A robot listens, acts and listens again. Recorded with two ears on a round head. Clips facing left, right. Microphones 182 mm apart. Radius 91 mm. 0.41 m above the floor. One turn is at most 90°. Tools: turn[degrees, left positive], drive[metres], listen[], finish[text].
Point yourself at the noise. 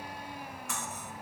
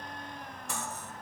Thought: The cutlery clinking: about 30° right or 150° right.
Action: turn[-30]
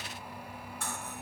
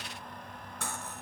Thought: So it is at 115° right.
Action: turn[-90]
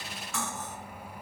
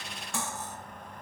Thought: The cutlery clinking is now 30° right.
Action: turn[-30]
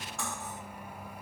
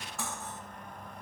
Action: finish[Facing the cutlery clinking.]